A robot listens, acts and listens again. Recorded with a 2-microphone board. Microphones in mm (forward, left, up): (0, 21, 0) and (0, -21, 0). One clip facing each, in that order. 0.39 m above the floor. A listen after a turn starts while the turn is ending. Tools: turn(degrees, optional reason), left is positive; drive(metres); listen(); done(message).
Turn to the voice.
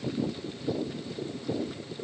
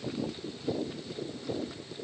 listen()
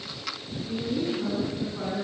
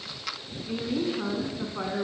turn(degrees=-40, reason="The woman speaking: about 40° right or 140° right.")
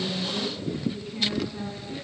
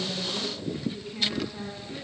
done("Found it: a woman speaking, straight ahead.")